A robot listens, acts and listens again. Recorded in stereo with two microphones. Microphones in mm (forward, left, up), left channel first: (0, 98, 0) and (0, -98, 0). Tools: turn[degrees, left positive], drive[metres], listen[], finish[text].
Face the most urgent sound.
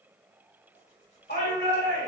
Thought: The shout: about 60° left or 120° left.
Action: turn[60]
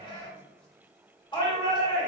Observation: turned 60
Thought: So it is at 30° left.
Action: turn[30]
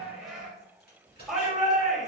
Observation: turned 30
Action: finish[Facing the shout, 1 to 2 m away.]